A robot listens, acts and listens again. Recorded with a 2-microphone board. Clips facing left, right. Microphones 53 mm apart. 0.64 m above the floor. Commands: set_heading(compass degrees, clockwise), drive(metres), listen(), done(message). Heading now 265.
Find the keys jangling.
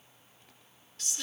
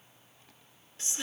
listen()
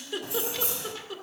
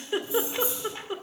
set_heading(195)
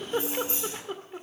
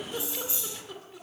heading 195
set_heading(155)
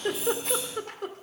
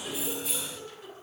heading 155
done("Facing the keys jangling.")